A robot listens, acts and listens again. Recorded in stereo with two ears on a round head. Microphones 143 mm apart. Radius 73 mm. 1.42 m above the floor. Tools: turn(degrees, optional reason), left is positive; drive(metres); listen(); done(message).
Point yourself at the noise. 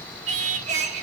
turn(degrees=-45, reason="The singing: about 45° right or 135° right.")
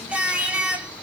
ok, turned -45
turn(degrees=-10, reason="So it is at 10° right.")
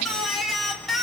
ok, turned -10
done("Found it: singing, straight ahead, 1 to 2 m away.")